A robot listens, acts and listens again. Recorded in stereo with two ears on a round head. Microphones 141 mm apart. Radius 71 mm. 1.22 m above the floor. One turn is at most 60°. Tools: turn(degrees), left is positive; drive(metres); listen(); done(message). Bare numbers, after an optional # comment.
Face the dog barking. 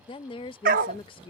# The dog barking: about 60° right or 120° right.
turn(-60)
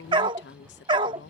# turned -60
# So it is at 35° right.
turn(-35)
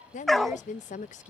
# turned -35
done("Facing the dog barking.")